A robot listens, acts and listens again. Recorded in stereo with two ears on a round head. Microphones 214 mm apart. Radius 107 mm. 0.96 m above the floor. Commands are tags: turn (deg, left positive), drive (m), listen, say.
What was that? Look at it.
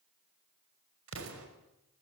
<turn deg="-60"/>
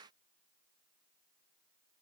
<listen/>
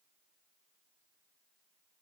<say>I heard an explosion, but can't make it out now. It was about straight ahead or 60° right.</say>